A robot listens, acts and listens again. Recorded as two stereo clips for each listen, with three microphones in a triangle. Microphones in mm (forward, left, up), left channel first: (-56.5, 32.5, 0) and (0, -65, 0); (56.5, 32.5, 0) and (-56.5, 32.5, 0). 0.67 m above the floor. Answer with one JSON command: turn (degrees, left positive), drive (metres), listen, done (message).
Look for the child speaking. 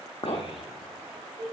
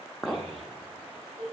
{"turn": 160}
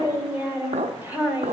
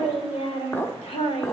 {"turn": 15}
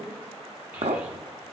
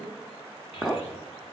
{"listen": true}
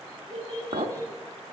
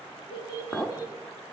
{"turn": 50}
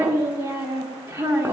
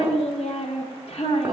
{"done": "Found it: a child speaking, straight ahead."}